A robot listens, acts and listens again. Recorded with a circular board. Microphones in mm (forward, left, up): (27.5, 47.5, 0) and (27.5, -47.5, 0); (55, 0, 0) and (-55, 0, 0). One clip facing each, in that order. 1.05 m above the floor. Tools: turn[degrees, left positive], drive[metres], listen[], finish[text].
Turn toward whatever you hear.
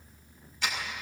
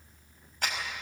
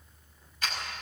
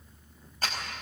Thought: The clap: 130° right.
Action: turn[-130]
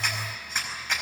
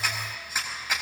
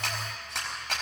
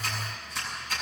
Action: finish[Found it: a clap, straight ahead.]